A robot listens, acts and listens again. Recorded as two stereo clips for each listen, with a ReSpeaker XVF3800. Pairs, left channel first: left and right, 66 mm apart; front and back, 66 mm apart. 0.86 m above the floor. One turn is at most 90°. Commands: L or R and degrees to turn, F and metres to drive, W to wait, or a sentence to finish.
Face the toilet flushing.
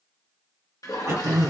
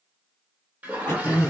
L90
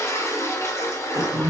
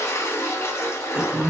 L45
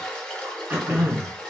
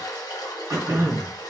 L15
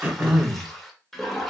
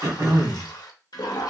Facing the toilet flushing, under 1 m away.